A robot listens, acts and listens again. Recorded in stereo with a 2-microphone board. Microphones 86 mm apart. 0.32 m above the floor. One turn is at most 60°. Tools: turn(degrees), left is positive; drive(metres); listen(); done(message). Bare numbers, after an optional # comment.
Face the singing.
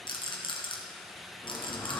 # The singing: about 30° left or 150° left.
turn(30)
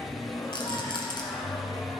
# The singing: about 40° left or 140° left.
turn(40)
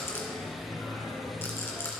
# So it is at 110° left.
turn(60)
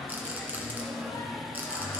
# The singing is now 65° left.
turn(60)
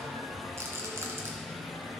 # The singing is now 50° left.
turn(50)
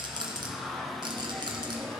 # The singing is now 15° left.
turn(15)
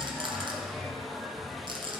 done("Found it: singing, straight ahead.")